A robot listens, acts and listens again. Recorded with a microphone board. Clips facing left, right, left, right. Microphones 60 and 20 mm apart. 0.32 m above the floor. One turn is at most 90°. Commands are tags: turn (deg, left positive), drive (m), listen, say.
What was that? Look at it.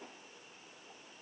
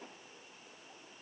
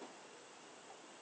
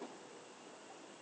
<listen/>
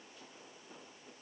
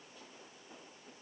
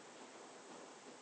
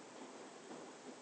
<listen/>
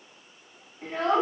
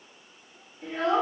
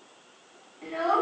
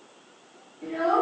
<turn deg="40"/>
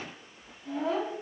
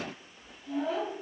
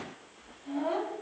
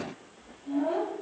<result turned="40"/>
<turn deg="90"/>
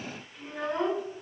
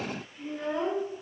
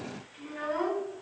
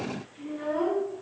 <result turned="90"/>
<turn deg="55"/>
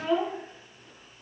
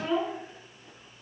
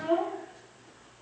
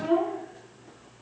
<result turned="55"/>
<turn deg="-10"/>
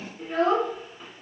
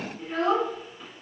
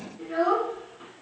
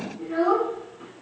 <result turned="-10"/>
<say>Found it: a child speaking, straight ahead, 1 to 2 m away.</say>